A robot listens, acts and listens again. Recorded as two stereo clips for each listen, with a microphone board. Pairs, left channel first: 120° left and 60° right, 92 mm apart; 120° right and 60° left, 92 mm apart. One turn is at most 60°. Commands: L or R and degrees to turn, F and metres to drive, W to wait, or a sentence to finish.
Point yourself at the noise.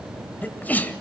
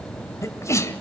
R60
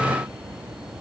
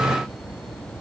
R60
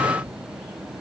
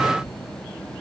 R50
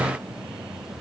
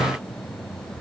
Facing where the sneeze came from. I can't hear it now.